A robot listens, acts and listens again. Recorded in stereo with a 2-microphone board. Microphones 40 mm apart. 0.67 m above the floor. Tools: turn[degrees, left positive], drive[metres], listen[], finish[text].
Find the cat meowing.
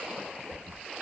Action: listen[]
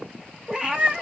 Thought: The cat meowing: about 20° right or 160° right.
Action: turn[-20]
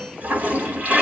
Action: listen[]
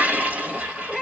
Action: finish[Found it: a cat meowing, straight ahead, 1 to 2 m away.]